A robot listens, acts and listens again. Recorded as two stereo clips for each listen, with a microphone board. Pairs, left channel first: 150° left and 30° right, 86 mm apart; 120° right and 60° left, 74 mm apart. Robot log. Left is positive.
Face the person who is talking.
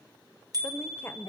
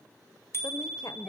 note: The woman speaking: 145° right.
cmd yaw -145
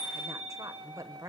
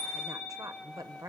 note: The woman speaking is now 20° left.
cmd yaw +20
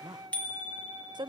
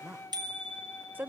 end: Found it: a woman speaking, straight ahead, 1 to 2 m away.